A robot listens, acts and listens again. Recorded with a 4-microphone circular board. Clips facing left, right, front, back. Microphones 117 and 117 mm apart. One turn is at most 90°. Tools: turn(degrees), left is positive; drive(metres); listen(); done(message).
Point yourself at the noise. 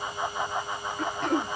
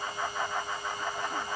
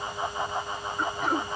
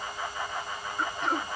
turn(degrees=85)
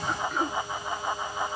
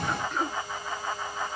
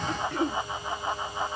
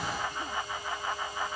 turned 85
done("Facing the throat clearing.")